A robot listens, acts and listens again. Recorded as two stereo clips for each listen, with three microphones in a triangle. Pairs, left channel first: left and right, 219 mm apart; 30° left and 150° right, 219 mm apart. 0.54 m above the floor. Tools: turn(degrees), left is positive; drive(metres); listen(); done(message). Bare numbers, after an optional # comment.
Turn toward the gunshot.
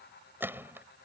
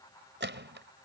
# The gunshot: 170° right.
turn(-170)
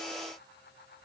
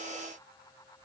done("I heard a gunshot from this way, but can't make it out now.")